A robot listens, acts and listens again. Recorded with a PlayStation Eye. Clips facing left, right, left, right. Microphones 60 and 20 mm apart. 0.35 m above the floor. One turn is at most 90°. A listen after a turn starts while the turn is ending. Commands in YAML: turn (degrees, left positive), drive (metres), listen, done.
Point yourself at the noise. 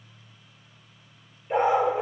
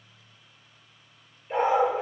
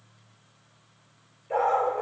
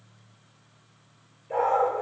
turn: 30
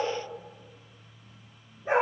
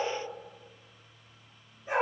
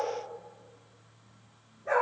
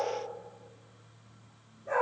turn: 90
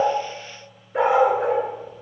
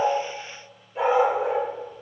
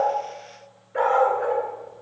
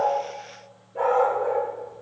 turn: 75
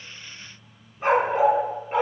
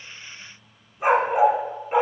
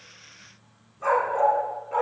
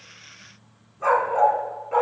turn: -15
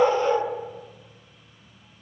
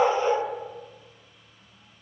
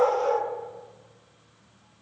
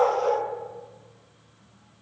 done: "Found it: a dog barking, straight ahead, 1 to 2 m away."